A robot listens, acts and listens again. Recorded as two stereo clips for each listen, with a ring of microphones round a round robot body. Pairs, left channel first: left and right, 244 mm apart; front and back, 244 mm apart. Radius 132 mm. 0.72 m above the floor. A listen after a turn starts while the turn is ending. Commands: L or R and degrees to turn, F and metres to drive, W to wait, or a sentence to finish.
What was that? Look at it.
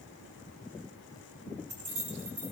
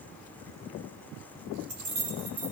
R145
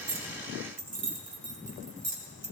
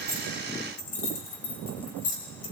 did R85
R35
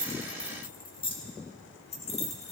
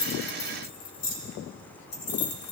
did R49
L25
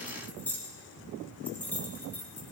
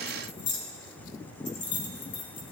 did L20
L10
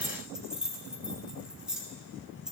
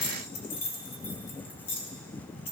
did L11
Facing the keys jangling.